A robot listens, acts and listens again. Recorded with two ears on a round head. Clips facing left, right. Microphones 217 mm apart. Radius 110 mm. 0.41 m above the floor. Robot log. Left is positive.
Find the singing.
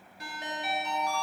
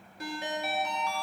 cmd idle
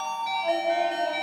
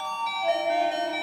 note: The singing: about 15° right or 165° right.
cmd yaw -15
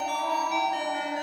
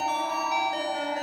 cmd idle
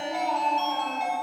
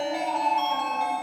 note: The singing: about 20° right or 160° right.
cmd yaw -20
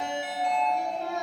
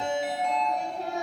note: The singing: about 30° right or 150° right.
cmd yaw -30
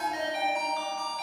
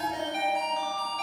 cmd idle
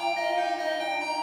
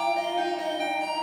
note: So it is at 120° right.
cmd yaw -120
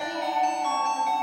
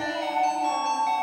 cmd idle
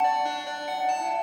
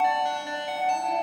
cmd idle
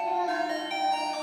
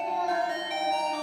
end: Found it: singing, straight ahead, over 4 m away.